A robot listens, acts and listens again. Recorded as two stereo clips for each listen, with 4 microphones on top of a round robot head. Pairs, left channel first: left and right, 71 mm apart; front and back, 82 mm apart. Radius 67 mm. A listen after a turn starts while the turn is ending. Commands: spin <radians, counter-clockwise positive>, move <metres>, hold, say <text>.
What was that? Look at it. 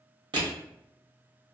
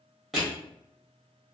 spin -1.57
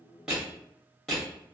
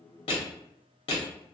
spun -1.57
say Found it: crushing, straight ahead.